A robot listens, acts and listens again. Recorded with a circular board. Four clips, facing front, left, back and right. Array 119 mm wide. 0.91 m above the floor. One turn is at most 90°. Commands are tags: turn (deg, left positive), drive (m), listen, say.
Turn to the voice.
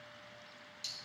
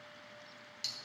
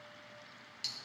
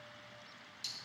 <listen/>
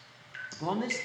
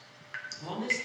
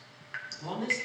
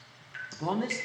<turn deg="-50"/>
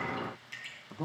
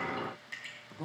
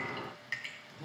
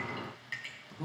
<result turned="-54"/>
<turn deg="10"/>
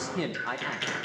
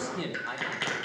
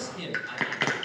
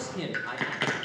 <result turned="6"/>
<say>Facing the man speaking, 1 to 2 m away.</say>